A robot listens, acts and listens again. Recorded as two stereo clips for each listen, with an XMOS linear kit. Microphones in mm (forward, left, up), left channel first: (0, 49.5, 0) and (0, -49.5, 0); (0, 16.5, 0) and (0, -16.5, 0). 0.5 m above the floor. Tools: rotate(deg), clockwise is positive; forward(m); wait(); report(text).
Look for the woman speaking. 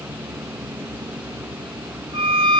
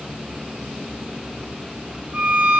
wait()
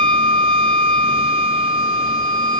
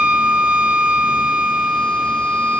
wait()
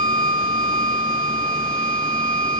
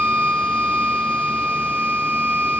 report("I can't make out a woman speaking, only a violin.")